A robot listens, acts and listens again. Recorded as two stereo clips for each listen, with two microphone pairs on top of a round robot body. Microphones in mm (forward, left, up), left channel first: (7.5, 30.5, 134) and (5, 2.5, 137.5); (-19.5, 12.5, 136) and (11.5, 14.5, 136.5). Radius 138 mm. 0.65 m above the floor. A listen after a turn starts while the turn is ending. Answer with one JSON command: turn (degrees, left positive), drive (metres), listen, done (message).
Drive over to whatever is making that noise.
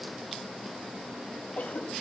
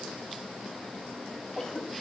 {"turn": 115}
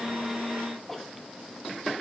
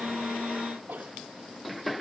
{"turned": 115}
{"turn": 10}
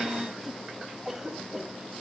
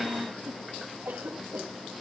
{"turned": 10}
{"drive": 1.0}
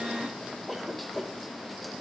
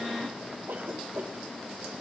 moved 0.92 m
{"drive": 1.0}
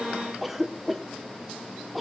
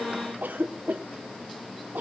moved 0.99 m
{"drive": 1.0}
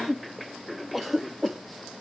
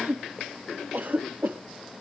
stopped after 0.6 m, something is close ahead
{"done": "Arrived at the cough, straight ahead."}